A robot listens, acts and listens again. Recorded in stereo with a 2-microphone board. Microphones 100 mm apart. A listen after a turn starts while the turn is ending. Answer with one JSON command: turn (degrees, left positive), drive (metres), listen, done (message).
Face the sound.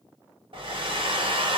{"turn": -55}
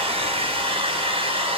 {"turn": -70}
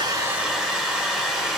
{"done": "Facing the hair dryer, under 1 m away."}